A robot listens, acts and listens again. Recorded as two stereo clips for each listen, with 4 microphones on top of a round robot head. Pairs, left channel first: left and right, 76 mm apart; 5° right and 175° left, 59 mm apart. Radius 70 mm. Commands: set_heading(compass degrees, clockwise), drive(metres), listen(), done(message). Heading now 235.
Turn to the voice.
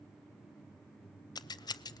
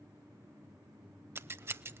listen()
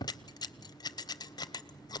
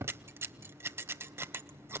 listen()
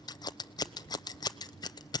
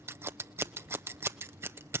done("I can't make out anyone speaking to turn to.")